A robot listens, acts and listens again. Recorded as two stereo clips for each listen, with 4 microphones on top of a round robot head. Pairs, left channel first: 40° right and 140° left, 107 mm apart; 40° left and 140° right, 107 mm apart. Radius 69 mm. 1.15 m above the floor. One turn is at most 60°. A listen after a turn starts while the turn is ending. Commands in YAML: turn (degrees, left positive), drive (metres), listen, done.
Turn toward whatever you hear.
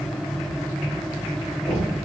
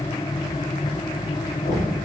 turn: 45
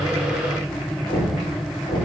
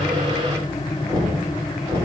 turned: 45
done: "Found it: knocking, straight ahead."